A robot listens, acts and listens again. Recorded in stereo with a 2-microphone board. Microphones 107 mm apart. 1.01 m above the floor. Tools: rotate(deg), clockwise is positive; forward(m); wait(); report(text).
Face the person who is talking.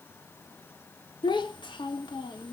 rotate(-45)
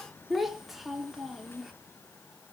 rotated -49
report("Facing the child speaking, 1 to 2 m away.")